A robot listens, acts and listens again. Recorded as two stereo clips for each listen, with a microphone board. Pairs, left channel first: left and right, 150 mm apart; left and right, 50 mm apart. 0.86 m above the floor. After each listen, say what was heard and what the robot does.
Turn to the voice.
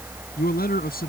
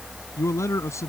Turn 90° left.
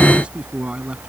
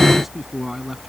Found it: a man speaking, straight ahead.